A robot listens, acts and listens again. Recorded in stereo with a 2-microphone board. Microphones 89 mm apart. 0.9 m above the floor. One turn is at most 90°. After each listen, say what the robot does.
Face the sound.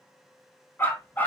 Turn 20° left.
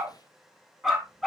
Found it: a dog barking, straight ahead.